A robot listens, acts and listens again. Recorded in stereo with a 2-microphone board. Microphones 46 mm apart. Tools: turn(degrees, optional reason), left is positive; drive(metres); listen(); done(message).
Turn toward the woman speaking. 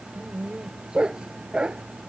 listen()
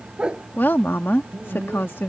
turn(degrees=55, reason="The woman speaking: about 55° left or 125° left.")
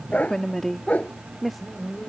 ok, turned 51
done("Facing the woman speaking.")